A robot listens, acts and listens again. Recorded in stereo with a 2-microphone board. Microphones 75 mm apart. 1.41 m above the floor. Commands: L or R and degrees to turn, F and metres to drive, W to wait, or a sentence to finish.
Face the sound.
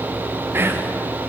R30
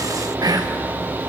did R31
R120
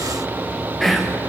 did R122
Facing the whispering.